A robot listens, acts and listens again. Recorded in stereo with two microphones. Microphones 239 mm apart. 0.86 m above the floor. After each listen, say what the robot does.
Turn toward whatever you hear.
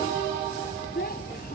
Turn 40° left.
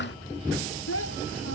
Turn 95° left.
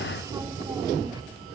Keep listening.
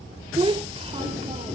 Turn 25° right.
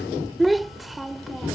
Facing the child speaking.